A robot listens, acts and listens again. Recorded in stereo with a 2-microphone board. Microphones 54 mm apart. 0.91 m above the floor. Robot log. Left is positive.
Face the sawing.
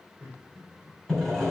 cmd yaw +30
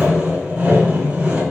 note: So it is at 25° right.
cmd yaw -25
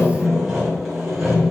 end: Found it: sawing, straight ahead.